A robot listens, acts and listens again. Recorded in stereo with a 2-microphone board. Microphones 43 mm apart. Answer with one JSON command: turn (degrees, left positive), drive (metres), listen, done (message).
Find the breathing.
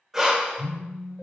{"turn": -30}
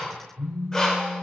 {"turn": 15}
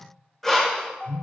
{"done": "Facing the breathing, under 1 m away."}